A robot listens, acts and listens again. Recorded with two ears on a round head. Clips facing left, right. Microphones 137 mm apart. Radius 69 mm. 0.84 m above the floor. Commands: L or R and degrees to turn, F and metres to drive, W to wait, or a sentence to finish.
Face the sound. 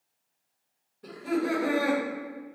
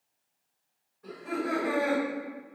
L35
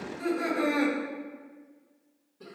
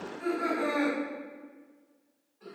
L105
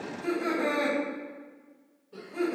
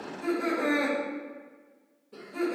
Facing the laughter, 2 to 4 m away.